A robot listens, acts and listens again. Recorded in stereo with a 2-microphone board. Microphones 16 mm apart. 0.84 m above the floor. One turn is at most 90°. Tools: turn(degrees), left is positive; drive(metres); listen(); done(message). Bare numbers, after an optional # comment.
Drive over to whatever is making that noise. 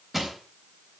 # The crushing: about 20° right or 160° right.
turn(-20)
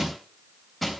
drive(1.0)
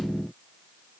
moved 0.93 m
listen()
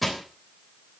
drive(1.0)
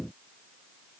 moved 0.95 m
listen()
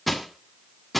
drive(1.0)
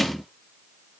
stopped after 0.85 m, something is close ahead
# The crushing is now 10° left.
turn(10)
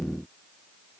listen()
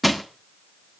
done("I am next to the crushing.")